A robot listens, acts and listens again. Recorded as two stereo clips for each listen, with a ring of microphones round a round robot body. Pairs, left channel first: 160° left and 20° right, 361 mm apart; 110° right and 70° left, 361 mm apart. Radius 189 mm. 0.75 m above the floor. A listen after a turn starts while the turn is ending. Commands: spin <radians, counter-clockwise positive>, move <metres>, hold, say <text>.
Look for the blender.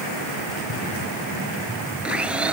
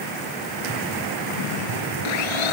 spin -1.92
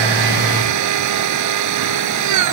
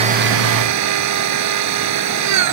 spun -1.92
spin 0.35
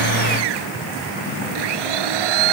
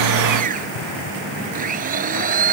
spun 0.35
say Facing the blender.